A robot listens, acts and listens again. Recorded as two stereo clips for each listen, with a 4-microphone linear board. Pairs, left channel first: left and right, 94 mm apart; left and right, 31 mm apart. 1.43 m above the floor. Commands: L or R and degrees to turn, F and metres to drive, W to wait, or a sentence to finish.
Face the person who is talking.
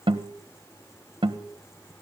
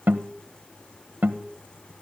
W
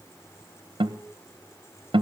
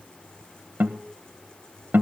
W
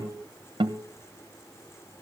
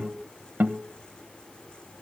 I can't make out anyone speaking to turn to.